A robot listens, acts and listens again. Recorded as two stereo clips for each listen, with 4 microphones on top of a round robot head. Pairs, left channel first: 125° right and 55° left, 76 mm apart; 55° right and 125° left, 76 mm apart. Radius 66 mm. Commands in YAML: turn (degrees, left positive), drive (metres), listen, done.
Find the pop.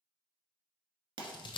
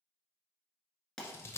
turn: 30
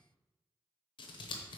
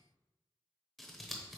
done: "Facing where the pop came from. I can't hear it now."